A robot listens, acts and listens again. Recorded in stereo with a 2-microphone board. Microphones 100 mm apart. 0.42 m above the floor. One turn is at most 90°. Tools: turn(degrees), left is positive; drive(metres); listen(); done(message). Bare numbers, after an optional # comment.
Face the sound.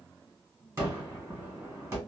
# The gunshot: about 30° right or 150° right.
turn(-30)
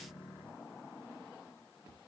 listen()
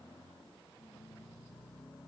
done("I heard a gunshot, but can't make it out now. It was about straight ahead or 120° right.")